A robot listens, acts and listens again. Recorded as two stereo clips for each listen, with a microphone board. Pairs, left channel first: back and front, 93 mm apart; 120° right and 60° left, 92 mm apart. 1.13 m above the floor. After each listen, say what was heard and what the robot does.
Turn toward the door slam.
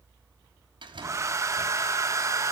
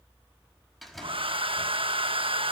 The door slam: 30° right. Turn 30° right.
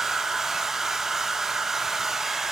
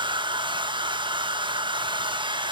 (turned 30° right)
I heard a door slam from this way, but can't make it out now.